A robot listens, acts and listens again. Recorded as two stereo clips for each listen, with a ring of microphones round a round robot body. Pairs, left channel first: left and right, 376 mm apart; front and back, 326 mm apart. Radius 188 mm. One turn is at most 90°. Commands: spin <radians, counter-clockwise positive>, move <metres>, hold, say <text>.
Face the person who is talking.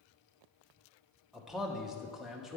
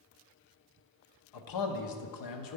say Facing the man speaking, under 1 m away.